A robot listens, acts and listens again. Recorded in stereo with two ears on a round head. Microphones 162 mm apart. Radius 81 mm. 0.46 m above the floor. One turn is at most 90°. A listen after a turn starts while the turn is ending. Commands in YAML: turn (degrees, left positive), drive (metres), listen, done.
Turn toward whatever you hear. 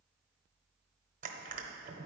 turn: -45
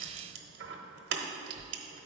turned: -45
turn: -80
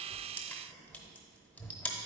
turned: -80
turn: 10
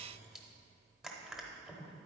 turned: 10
done: "Found it: crushing, straight ahead."